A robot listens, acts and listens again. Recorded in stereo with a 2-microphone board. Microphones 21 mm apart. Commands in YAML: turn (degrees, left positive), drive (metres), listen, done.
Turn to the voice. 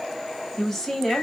turn: 15
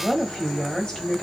turn: 150
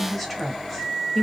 done: "Found it: a woman speaking, straight ahead."